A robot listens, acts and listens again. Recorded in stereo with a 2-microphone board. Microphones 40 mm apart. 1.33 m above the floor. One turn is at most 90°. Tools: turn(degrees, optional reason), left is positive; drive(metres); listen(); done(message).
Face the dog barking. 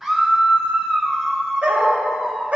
turn(degrees=-35, reason="The dog barking: about 35° right or 145° right.")
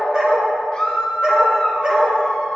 turn(degrees=-25, reason="The dog barking: about 25° right or 155° right.")
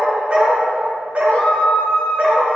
turn(degrees=-40, reason="The dog barking: about 40° right or 140° right.")
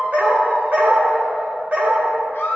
turn(degrees=-40, reason="The dog barking: about 40° right or 140° right.")
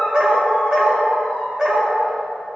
turn(degrees=-20, reason="So it is at 20° right.")
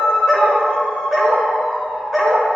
done("Facing the dog barking, 1 to 2 m away.")